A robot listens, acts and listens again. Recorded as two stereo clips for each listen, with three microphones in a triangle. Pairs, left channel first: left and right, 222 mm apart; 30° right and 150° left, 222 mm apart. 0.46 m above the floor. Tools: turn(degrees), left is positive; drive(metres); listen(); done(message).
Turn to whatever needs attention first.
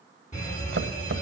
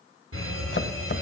turn(degrees=145)
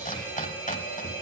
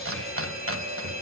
turn(degrees=-10)
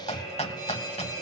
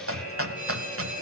done("Found it: a fire alarm, straight ahead.")